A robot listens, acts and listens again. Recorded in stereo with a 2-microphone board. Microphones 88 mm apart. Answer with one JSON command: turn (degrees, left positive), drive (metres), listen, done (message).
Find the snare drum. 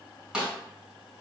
{"turn": -30}
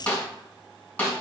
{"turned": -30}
{"turn": 20}
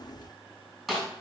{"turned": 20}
{"done": "Found it: a snare drum, straight ahead, 2 to 4 m away."}